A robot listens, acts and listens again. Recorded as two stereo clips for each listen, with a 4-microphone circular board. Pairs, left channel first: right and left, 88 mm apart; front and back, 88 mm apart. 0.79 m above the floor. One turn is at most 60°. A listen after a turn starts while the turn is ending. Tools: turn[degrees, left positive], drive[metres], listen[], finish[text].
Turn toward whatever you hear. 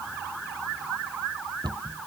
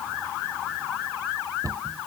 Thought: The cupboard door: 130° left.
Action: turn[60]
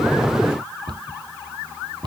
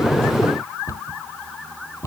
Thought: The cupboard door is now 55° left.
Action: turn[55]
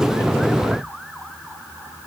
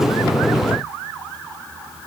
Action: listen[]
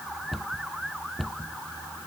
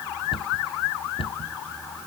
Action: finish[Found it: a cupboard door, straight ahead.]